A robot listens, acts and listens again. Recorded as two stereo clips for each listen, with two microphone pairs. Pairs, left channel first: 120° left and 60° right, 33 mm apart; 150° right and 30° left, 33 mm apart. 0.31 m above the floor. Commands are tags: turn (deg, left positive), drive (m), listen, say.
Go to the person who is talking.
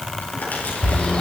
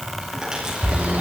<listen/>
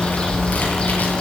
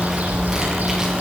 <listen/>
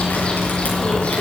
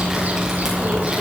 <say>I can't make out anyone speaking, only a bird.</say>